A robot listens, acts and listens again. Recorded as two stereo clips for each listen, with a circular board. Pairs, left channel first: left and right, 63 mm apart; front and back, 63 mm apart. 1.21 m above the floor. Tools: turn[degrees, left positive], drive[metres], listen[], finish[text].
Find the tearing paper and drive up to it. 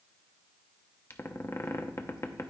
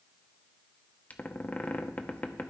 Action: listen[]
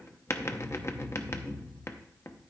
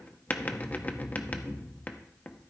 Action: listen[]
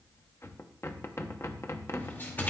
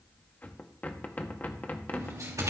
Thought: The tearing paper: 150° left.
Action: turn[150]
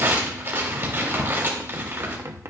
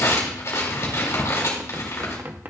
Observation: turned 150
Thought: The tearing paper is now 40° right.
Action: turn[-40]
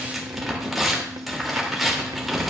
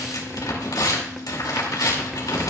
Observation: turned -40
Action: drive[1.0]
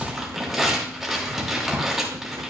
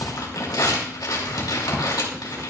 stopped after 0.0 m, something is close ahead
Action: finish[Something is in my way. I am facing the tearing paper but have not reached it.]